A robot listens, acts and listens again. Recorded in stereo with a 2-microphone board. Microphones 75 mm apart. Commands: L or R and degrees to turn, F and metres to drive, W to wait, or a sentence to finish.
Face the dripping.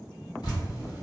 L70
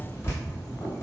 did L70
L35
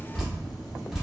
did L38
Found it: dripping, straight ahead.